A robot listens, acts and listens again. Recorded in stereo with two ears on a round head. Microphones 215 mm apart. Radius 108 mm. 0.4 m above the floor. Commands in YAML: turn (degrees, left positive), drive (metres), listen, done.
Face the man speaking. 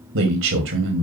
turn: -55
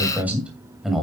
done: "Found it: a man speaking, straight ahead, 2 to 4 m away."